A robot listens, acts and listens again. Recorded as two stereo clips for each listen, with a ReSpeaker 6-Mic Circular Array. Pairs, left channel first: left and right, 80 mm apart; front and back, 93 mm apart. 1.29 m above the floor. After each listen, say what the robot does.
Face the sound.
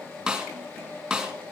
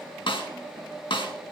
Found it: a snare drum, straight ahead, 2 to 4 m away.